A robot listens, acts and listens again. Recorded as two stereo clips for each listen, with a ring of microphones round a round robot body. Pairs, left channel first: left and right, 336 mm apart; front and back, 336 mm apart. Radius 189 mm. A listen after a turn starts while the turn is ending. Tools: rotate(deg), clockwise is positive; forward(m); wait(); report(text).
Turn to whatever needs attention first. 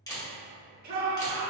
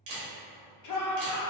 rotate(25)
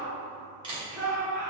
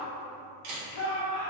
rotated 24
report("Facing the shout.")